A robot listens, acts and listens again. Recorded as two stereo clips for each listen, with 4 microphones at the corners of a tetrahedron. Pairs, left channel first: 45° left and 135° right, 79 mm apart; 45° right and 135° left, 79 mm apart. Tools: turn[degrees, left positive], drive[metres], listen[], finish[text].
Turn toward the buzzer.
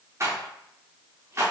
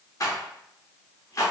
Action: listen[]
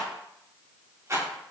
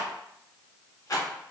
Action: listen[]
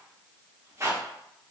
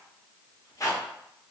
Action: finish[I can't make out a buzzer, only a rattle.]